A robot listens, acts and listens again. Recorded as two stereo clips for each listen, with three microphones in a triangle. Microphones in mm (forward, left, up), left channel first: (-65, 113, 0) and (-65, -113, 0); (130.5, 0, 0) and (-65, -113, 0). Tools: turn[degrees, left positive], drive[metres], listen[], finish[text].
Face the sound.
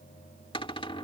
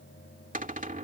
Thought: The cupboard door: 160° left.
Action: turn[160]
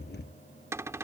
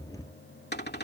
Thought: The cupboard door is now 10° right.
Action: turn[-10]
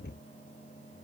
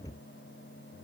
Action: listen[]
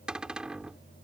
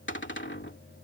Action: finish[Found it: a cupboard door, straight ahead.]